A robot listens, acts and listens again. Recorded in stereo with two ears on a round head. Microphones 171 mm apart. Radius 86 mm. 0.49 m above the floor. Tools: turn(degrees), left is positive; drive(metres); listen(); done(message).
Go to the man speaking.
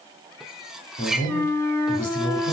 turn(degrees=45)
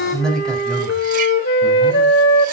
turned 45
drive(metres=1.0)
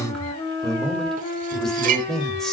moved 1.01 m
drive(metres=1.0)
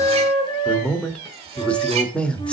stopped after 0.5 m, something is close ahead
turn(degrees=10)
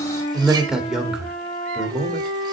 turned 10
done("Arrived at the man speaking, straight ahead.")